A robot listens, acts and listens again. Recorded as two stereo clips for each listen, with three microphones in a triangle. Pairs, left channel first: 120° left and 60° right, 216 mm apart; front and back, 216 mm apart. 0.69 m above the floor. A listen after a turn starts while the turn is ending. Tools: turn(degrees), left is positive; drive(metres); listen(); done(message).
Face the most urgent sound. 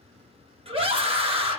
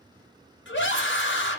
done("Facing the scream, under 1 m away.")